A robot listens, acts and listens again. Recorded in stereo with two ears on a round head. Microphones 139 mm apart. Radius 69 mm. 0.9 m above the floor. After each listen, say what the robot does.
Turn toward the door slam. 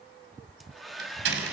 Turn 90° right.
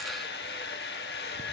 I heard a door slam from this way, but can't make it out now.